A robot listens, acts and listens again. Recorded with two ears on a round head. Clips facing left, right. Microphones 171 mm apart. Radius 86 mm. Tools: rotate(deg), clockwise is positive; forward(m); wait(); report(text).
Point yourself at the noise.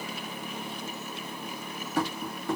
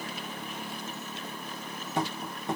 rotate(20)
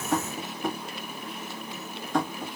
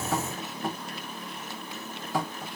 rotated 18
report("Facing the tapping, 1 to 2 m away.")